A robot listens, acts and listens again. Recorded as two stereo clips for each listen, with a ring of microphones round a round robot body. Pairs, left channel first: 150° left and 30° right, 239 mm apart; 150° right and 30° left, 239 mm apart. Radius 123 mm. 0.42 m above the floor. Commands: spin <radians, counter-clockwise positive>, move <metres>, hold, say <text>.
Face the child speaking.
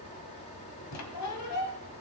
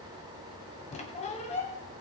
hold
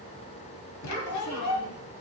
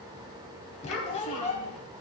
spin 3.14
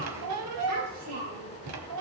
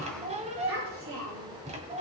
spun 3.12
spin -0.17
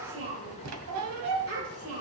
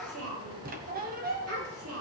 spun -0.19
say Facing the child speaking.